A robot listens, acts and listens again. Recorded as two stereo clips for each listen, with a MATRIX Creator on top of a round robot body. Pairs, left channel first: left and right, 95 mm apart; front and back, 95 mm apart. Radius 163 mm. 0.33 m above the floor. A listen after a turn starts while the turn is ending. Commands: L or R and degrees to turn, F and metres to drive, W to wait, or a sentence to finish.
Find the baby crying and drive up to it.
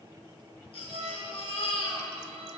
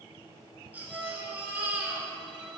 L105
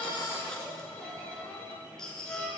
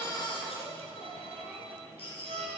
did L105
F1.0
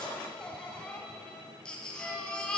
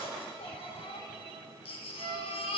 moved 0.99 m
L10
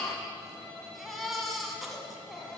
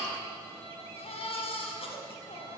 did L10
F1.0
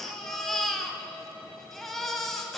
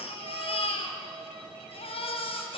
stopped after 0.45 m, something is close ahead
Arrived at the baby crying, straight ahead.